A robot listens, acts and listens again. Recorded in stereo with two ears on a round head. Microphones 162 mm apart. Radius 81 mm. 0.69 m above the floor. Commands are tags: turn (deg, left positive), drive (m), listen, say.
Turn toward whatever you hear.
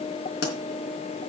<turn deg="65"/>
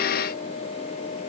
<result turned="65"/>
<listen/>
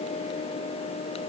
<say>I heard a pop, but can't make it out now. It was about straight ahead or 50° left.</say>